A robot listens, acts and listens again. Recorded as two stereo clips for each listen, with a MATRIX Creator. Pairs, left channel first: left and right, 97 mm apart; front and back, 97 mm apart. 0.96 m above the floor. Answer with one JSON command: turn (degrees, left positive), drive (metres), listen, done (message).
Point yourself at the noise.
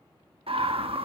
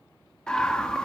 {"turn": -80}
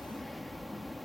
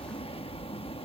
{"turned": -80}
{"done": "Found it: a scream, straight ahead, 1 to 2 m away."}